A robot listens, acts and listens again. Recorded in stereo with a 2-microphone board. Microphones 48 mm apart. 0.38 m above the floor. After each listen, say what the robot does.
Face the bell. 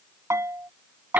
Turn 70° right.
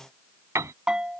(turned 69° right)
Turn 15° right.
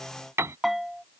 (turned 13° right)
Facing the bell.